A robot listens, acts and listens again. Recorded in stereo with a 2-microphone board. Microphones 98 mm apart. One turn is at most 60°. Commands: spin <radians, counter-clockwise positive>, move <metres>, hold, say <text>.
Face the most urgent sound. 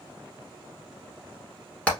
hold
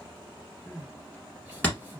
spin -0.26
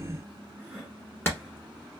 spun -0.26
say Found it: crying, straight ahead, 1 to 2 m away.